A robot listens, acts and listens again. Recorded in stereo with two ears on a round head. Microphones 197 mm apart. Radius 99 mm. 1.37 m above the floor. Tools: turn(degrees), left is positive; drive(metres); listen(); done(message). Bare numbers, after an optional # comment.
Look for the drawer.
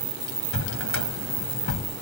# The drawer: about 75° left or 105° left.
turn(75)
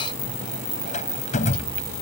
# So it is at 35° left.
turn(35)
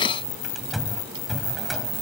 done("Found it: a drawer, straight ahead.")